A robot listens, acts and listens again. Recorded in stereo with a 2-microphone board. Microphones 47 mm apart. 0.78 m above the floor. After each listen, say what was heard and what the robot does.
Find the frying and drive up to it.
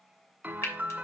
Turn 90° left.
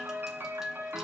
Keep listening.
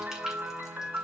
Keep listening.
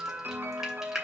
The frying is now 10° right. Turn 10° right.
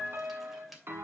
Keep listening.
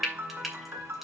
Drive 1.0 m forward.
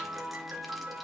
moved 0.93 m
Keep listening.
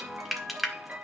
Drive 1.0 m forward.
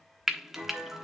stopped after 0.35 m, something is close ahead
I am next to the frying.